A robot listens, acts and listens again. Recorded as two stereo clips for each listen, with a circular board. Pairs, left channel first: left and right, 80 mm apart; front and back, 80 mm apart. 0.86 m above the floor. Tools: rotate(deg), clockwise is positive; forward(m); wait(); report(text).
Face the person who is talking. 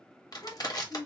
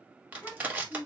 rotate(-70)
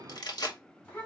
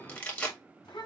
rotate(-25)
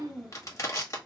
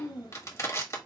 report("Found it: a child speaking, straight ahead, 2 to 4 m away.")